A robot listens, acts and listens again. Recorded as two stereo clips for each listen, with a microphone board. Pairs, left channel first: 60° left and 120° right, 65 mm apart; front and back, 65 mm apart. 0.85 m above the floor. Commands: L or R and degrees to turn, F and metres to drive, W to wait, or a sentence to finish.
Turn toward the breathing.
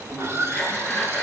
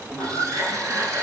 L135
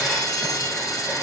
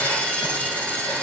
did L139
W
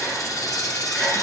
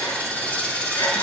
W
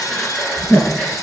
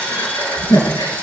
Facing the breathing, over 4 m away.